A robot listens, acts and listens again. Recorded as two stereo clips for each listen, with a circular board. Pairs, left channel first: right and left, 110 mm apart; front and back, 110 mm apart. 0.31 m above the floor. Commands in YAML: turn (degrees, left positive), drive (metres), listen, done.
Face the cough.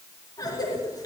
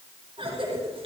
turn: -145
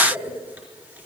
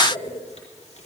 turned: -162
turn: 15
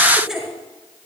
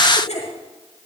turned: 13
done: "Facing the cough."